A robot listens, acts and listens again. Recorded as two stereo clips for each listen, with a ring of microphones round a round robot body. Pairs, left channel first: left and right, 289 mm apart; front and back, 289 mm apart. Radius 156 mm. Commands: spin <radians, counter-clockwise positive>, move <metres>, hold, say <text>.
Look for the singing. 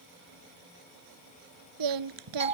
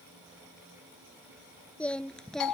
spin -1.57
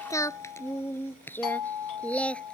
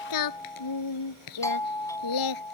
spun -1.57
say Found it: singing, straight ahead.